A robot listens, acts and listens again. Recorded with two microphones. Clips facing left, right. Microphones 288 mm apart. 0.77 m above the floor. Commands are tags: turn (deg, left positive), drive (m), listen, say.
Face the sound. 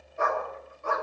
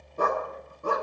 <turn deg="-35"/>
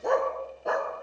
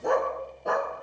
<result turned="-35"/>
<say>Found it: a dog barking, straight ahead, 2 to 4 m away.</say>